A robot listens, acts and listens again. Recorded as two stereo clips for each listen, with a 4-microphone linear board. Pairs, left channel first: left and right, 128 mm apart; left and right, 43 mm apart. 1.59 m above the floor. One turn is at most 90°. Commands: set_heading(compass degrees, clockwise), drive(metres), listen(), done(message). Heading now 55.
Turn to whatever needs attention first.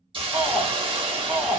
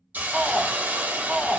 set_heading(85)
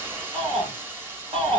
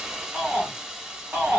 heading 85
set_heading(175)
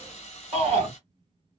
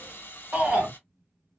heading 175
set_heading(220)
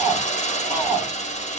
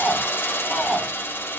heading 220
set_heading(240)
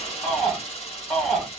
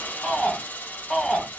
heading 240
done("Found it: a shout, straight ahead.")